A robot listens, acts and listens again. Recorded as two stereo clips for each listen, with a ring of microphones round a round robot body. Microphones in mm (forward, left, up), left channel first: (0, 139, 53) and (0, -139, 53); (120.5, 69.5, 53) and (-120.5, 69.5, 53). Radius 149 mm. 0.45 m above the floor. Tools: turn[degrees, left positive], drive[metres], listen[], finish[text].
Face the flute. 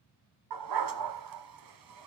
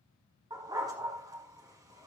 Action: listen[]
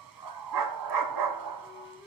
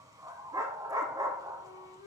Thought: The flute: 15° left.
Action: turn[15]
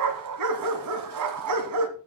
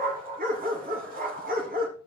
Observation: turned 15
Action: listen[]
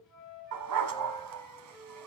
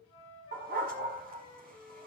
Action: finish[Found it: a flute, straight ahead, over 4 m away.]